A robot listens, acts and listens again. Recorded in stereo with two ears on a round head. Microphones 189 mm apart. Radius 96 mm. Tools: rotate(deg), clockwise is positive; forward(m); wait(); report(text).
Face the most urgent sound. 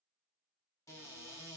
wait()
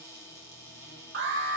rotate(55)
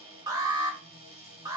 rotate(20)
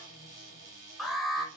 report("Found it: an alarm, straight ahead.")